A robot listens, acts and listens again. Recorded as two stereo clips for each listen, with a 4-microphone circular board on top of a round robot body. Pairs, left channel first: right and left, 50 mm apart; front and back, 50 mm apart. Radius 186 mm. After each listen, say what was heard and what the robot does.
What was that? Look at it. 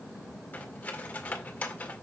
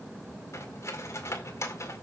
The cutlery clinking: 25° right. Turn 25° right.
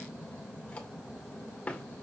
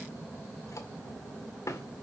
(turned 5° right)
The cutlery clinking is now 20° right. Turn 20° right.
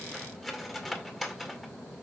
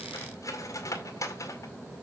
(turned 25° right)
Found it: cutlery clinking, straight ahead.